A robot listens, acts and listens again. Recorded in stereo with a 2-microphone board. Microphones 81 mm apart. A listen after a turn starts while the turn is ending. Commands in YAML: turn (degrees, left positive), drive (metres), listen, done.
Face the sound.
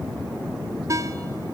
turn: -40
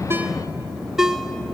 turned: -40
done: "Found it: a ringtone, straight ahead."